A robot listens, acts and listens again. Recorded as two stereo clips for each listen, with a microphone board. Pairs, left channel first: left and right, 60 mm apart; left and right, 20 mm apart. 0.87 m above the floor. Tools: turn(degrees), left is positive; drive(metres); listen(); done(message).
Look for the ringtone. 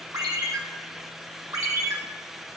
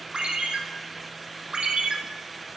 turn(degrees=-90)
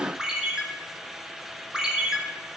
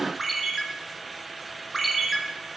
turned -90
turn(degrees=-10)
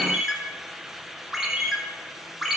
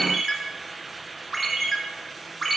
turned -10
done("Facing the ringtone.")